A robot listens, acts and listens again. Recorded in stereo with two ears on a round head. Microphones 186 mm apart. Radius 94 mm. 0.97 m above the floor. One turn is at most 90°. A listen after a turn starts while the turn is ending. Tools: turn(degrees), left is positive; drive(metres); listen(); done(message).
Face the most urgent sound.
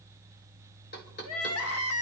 turn(degrees=90)
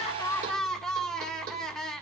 done("Facing the crying, 1 to 2 m away.")